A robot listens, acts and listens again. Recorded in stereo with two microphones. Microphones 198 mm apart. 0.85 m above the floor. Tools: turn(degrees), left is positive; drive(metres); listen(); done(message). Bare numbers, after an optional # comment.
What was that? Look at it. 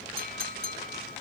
# The clink: about 50° right or 130° right.
turn(-50)
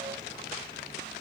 listen()
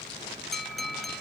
done("Found it: a clink, straight ahead.")